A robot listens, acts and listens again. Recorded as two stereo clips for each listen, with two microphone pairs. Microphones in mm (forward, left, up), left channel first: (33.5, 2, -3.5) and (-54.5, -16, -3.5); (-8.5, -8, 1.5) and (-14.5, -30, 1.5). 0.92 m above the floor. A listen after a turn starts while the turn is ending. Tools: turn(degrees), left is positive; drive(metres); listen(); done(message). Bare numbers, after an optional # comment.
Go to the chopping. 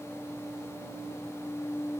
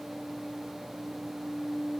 listen()
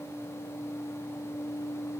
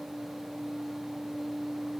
listen()
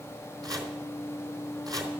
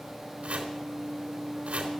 # The chopping: 125° right.
turn(-125)
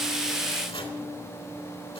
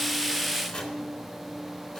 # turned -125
drive(1.0)
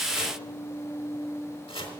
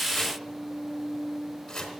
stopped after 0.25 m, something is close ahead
done("Blocked. The chopping is further on, straight ahead.")